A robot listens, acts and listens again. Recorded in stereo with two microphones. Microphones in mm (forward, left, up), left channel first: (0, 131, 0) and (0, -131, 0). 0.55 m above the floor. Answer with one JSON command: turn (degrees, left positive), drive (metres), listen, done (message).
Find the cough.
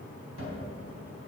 {"listen": true}
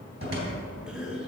{"turn": -30}
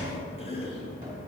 {"turn": 25}
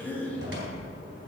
{"done": "Found it: a cough, straight ahead."}